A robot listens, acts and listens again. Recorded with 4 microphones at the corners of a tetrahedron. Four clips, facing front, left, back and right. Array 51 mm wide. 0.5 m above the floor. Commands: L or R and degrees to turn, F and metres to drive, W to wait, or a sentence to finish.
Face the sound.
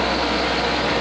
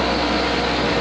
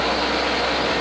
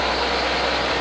W
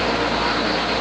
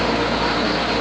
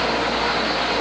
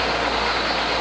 W
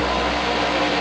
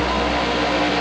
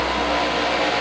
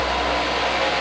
I can't make out anything.